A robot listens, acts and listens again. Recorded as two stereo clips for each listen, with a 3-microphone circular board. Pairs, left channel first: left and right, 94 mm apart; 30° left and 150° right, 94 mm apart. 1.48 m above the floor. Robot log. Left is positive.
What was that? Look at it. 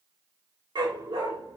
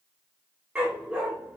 note: The dog barking: 75° right.
cmd yaw -75
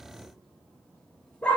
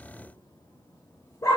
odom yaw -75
note: The dog barking is now 25° left.
cmd yaw +25
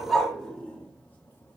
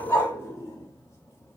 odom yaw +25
note: The dog barking is now 15° left.
cmd yaw +15
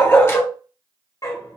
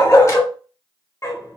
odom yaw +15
note: The dog barking is now 70° left.
cmd yaw +70
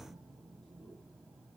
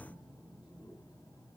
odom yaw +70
cmd idle
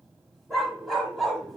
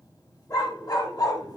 end: Found it: a dog barking, straight ahead.